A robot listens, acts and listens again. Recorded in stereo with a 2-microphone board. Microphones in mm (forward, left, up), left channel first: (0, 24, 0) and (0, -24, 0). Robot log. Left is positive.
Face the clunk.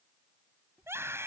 cmd idle
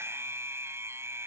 cmd idle
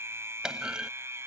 note: The clunk: about 15° right or 165° right.
cmd yaw -15
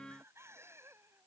cmd idle
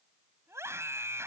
end: I heard a clunk, but can't make it out now. It was about straight ahead or 150° right.